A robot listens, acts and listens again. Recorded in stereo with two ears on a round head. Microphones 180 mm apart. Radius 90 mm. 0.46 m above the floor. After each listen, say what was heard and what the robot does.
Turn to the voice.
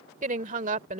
The woman speaking: about 35° right or 145° right. Turn 35° right.
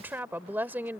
So it is at 10° right. Turn 10° right.
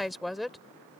Found it: a woman speaking, straight ahead.